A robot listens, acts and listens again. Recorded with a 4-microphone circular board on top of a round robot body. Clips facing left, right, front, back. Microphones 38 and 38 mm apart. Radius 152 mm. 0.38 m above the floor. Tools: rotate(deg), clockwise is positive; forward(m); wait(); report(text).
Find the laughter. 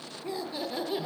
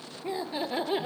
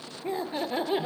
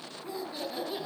rotate(45)
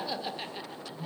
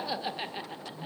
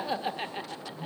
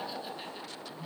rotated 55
rotate(35)
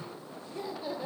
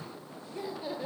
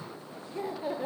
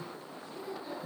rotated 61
rotate(15)
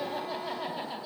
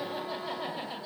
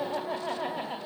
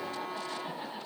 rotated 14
rotate(10)
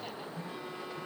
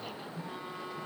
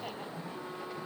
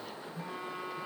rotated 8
wait()
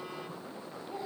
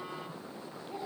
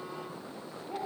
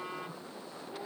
rotate(10)
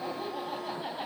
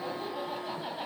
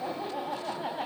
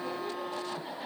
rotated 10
report("Facing the laughter.")